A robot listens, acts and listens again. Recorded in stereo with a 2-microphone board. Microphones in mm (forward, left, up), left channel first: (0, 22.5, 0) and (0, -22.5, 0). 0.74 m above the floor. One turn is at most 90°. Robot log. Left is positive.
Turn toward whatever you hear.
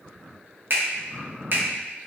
note: The finger snap: about 55° right or 125° right.
cmd yaw -55
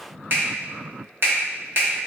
note: So it is at 65° right.
cmd yaw -65
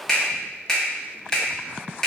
note: The finger snap is now 15° left.
cmd yaw +15
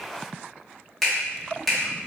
end: Facing the finger snap.